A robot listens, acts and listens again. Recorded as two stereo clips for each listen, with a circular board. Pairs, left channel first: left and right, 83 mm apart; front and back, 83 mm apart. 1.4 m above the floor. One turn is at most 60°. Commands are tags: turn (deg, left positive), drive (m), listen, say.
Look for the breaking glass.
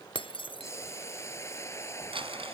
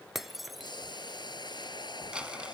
<turn deg="60"/>
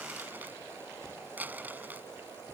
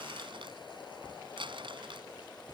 <turn deg="30"/>
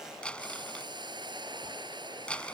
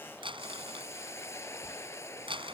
<say>Facing where the breaking glass came from. I can't hear it now.</say>